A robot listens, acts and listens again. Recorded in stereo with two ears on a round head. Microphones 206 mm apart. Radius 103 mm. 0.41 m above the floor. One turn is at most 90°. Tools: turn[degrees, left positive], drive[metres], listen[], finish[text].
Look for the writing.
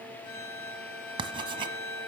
Thought: The writing: about 20° right or 160° right.
Action: turn[-20]
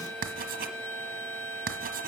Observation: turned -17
Thought: So it is at 140° right.
Action: turn[-90]
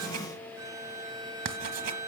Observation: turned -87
Thought: The writing is now 55° right.
Action: turn[-55]
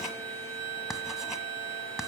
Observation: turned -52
Action: finish[Found it: writing, straight ahead, 1 to 2 m away.]